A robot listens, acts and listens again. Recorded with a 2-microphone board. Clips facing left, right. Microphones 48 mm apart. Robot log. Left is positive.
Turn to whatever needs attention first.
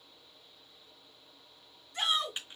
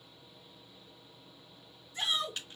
note: The shout: about 65° left or 115° left.
cmd yaw +65
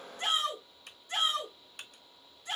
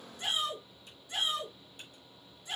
note: So it is at 50° left.
cmd yaw +50
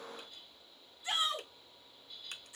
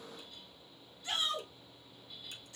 note: The shout is now 20° left.
cmd yaw +20
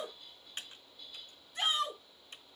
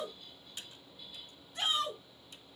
end: Found it: a shout, straight ahead.